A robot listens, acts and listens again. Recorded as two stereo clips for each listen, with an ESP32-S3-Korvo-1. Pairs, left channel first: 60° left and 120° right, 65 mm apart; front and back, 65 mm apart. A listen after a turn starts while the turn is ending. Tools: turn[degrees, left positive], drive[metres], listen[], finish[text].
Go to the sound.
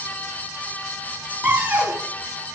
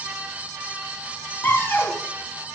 Thought: The cupboard door: 55° right.
Action: turn[-55]
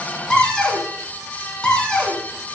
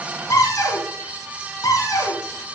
Thought: The cupboard door is now 15° right.
Action: turn[-15]
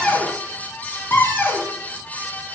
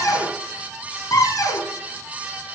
Action: drive[1.0]
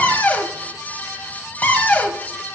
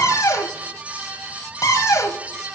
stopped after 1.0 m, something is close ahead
Action: finish[Arrived at the cupboard door, straight ahead.]